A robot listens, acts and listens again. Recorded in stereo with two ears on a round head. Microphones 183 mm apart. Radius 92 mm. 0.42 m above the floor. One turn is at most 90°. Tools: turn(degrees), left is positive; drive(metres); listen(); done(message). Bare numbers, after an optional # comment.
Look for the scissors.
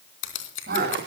# The scissors: about 60° left or 120° left.
turn(60)
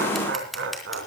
done("Found it: scissors, straight ahead.")